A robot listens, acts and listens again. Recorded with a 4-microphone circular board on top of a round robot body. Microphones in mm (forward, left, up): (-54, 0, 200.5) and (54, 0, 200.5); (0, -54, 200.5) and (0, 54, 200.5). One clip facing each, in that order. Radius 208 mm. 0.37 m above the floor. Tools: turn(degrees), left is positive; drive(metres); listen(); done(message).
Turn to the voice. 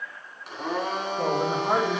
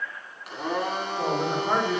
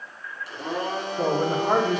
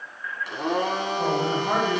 turn(degrees=-105)
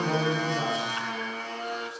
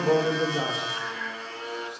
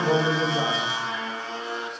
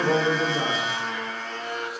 turn(degrees=10)
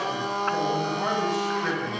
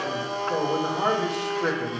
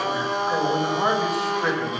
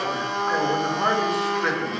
done("Facing the man speaking.")